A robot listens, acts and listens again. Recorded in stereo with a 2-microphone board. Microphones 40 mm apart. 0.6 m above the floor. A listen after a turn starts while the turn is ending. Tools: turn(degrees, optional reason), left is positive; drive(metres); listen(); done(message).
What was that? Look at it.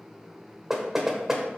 turn(degrees=-30)
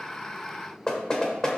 turn(degrees=20, reason="So it is at 20° left.")
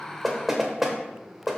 turn(degrees=-10, reason="The knocking is now 10° right.")
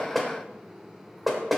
done("Facing the knocking, 1 to 2 m away.")